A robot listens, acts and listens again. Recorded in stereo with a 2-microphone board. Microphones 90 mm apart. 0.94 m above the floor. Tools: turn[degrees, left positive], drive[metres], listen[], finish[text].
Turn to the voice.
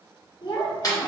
Thought: The child speaking: about 55° left or 125° left.
Action: turn[55]
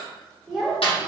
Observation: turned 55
Action: finish[Facing the child speaking, 1 to 2 m away.]